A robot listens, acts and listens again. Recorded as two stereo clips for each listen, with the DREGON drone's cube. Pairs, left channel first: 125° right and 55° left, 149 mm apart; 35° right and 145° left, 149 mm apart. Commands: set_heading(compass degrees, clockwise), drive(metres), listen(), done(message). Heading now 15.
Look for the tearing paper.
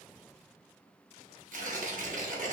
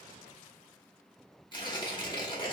set_heading(350)
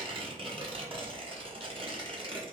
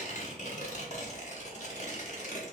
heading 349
done("Facing the tearing paper, under 1 m away.")